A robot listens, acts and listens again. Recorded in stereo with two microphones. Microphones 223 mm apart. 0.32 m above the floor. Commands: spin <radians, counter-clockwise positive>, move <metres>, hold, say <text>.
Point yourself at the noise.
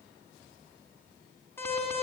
spin 0.52
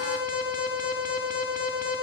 spin 2.36
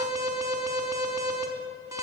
spin -0.26
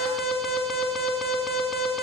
say Found it: an alarm, straight ahead, over 4 m away.